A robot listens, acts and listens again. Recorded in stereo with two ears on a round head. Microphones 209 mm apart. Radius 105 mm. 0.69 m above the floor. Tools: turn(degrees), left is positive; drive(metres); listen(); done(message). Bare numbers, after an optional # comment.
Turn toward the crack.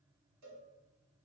listen()
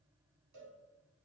listen()
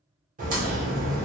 # The crack: about 35° right or 145° right.
turn(-35)
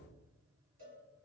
listen()
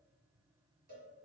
done("I heard a crack, but can't make it out now. It was about straight ahead or 110° right.")